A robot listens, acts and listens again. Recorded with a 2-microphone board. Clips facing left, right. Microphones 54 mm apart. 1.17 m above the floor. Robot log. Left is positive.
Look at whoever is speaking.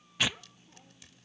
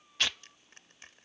note: The child speaking: about 55° left or 125° left.
cmd yaw +55
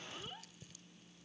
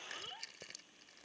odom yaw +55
end: Facing the child speaking.